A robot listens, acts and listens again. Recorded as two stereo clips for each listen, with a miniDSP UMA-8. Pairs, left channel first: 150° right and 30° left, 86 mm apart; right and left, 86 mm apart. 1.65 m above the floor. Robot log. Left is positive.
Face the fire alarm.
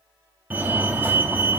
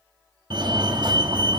note: The fire alarm: 95° left.
cmd yaw +95
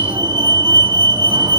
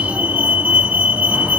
note: The fire alarm is now 20° left.
cmd yaw +20
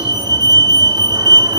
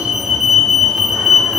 end: Facing the fire alarm.